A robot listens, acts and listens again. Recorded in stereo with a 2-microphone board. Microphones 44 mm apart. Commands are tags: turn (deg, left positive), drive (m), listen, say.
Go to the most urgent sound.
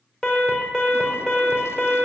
<turn deg="20"/>
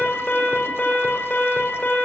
<turn deg="140"/>
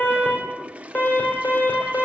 <turn deg="45"/>
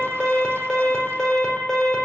<turn deg="15"/>
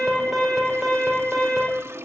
<drive m="1.0"/>
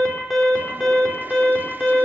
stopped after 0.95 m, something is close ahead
<say>Blocked. The alarm is further on, straight ahead.</say>